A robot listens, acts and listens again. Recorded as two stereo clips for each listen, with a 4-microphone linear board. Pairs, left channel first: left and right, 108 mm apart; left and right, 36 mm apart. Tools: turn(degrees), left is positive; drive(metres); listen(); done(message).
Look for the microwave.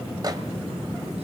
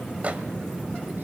turn(degrees=-40)
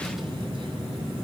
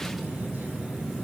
listen()
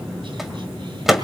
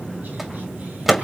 done("Facing the microwave.")